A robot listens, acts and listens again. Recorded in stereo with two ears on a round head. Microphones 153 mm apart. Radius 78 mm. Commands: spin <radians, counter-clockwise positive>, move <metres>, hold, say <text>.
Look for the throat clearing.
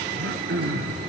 spin -1.13
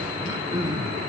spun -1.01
spin -0.44
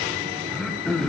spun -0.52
say Facing the throat clearing, under 1 m away.